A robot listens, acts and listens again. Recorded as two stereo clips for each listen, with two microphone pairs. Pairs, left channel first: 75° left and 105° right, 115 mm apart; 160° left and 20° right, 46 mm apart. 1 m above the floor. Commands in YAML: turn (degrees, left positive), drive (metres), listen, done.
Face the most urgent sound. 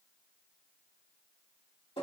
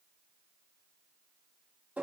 listen: true
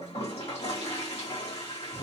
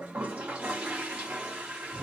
listen: true
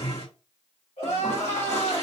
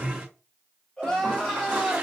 turn: 85
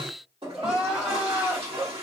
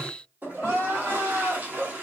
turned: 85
turn: -20
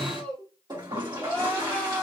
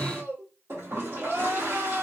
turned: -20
done: "Found it: crying, straight ahead."